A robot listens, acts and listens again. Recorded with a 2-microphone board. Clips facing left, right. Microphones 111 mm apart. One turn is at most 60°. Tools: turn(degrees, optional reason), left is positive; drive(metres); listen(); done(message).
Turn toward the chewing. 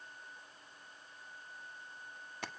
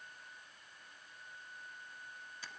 listen()
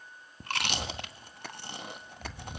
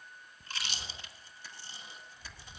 turn(degrees=60, reason="The chewing: about 65° left or 115° left.")
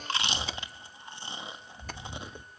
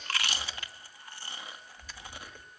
turn(degrees=25, reason="So it is at 25° left.")
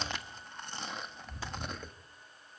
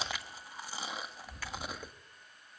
done("Found it: chewing, straight ahead, 1 to 2 m away.")